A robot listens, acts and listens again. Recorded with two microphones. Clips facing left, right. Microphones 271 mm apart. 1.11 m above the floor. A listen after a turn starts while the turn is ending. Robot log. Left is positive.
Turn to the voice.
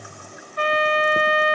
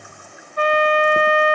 cmd idle
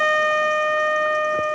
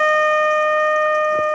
cmd idle
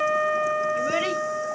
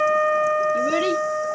note: The child speaking: about 45° right or 135° right.
cmd yaw -45
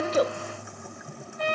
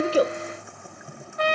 cmd idle
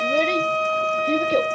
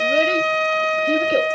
cmd idle
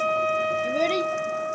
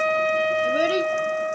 end: I heard a child speaking, but can't make it out now. It was about straight ahead or 90° right.